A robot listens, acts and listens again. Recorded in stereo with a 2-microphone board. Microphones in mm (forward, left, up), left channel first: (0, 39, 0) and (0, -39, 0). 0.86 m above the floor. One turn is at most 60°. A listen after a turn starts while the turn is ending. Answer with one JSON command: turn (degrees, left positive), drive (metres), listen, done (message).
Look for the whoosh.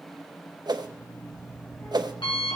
{"turn": -60}
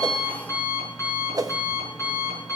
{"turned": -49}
{"turn": -60}
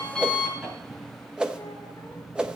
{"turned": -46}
{"turn": -15}
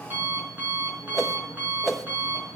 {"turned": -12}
{"done": "Facing the whoosh, under 1 m away."}